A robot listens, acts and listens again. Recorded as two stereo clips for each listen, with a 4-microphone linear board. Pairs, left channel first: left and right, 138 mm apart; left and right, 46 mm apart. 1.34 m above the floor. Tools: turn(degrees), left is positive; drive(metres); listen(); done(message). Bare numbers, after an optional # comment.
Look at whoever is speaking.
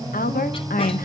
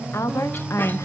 turn(90)
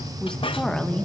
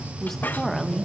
done("Found it: a woman speaking, straight ahead.")